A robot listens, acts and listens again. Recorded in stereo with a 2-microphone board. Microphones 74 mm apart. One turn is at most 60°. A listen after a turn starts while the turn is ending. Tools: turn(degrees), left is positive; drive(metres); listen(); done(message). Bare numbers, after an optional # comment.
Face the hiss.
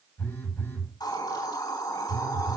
# The hiss: about 70° left or 110° left.
turn(60)
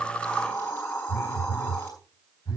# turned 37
# So it is at 35° left.
turn(35)
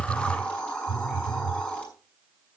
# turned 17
# The hiss is now 15° left.
turn(15)
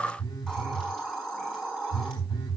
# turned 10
done("Facing the hiss, over 4 m away.")